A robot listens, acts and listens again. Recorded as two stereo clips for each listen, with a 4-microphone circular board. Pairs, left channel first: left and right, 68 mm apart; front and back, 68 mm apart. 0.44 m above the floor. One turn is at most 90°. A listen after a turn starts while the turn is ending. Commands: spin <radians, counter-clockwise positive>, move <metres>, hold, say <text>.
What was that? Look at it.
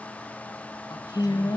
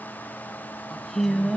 spin 1.57
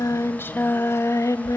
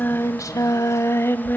spin 1.05
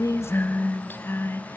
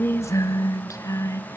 spin 0.61
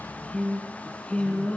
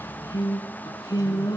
spin 0.35
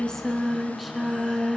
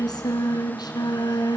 say Facing the singing, 2 to 4 m away.